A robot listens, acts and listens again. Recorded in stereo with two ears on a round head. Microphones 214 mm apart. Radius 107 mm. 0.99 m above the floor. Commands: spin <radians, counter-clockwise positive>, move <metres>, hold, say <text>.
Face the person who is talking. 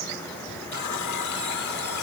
hold
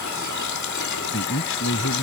spin 1.05
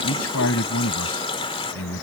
spin 1.05
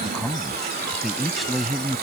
say Found it: a man speaking, straight ahead.